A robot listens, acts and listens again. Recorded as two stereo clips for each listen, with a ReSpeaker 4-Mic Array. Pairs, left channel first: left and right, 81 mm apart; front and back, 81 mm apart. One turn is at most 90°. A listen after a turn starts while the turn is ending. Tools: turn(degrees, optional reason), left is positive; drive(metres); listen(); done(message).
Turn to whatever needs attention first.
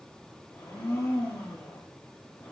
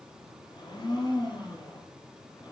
listen()
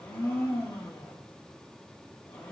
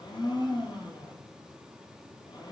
listen()
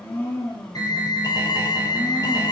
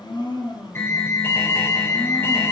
turn(degrees=60, reason="The alarm: 60° left.")
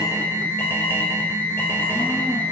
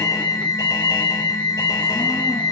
turn(degrees=30, reason="The alarm is now 30° left.")
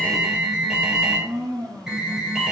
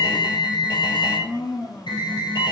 turn(degrees=-10, reason="The alarm is now 10° right.")
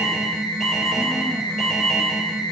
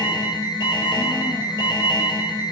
done("Found it: an alarm, straight ahead.")